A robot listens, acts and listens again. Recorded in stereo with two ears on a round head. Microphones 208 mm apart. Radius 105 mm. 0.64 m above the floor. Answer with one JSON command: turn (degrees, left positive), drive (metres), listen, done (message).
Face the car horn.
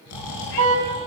{"turn": -90}
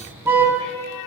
{"turn": -10}
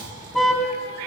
{"done": "Found it: a car horn, straight ahead."}